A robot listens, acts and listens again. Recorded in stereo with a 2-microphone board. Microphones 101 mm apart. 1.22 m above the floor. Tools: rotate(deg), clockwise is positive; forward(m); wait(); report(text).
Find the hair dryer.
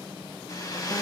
rotate(-35)
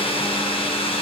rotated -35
rotate(-110)
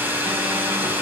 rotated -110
rotate(20)
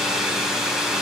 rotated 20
report("Found it: a hair dryer, straight ahead.")